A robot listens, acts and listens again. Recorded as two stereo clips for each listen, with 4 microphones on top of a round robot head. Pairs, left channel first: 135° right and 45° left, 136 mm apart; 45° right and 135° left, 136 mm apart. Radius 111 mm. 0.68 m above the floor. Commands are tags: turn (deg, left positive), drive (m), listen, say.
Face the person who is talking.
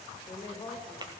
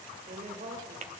<turn deg="160"/>
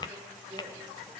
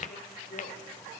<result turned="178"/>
<turn deg="-15"/>
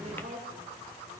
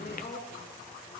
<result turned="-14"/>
<say>Found it: a woman speaking, straight ahead.</say>